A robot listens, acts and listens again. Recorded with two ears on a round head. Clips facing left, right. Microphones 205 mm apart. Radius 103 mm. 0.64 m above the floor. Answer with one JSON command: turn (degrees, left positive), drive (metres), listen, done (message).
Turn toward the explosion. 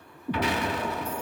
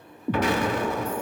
{"turn": -40}
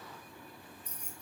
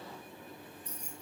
{"listen": true}
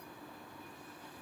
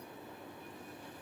{"done": "I heard an explosion, but can't make it out now. It was about straight ahead or 100° right."}